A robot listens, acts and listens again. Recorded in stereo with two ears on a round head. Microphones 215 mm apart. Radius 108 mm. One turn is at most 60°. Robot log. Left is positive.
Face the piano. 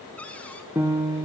cmd yaw -30
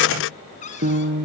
note: So it is at 140° right.
cmd yaw -60
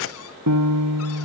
note: The piano is now 75° right.
cmd yaw -60
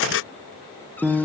end: Facing the piano, 2 to 4 m away.